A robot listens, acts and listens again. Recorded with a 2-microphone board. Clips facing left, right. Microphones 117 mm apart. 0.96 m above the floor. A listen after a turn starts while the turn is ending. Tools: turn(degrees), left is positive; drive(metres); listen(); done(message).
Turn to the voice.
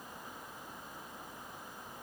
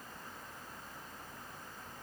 listen()
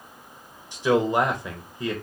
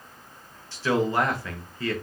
turn(degrees=15)
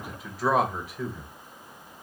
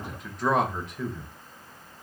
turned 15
done("Facing the man speaking, under 1 m away.")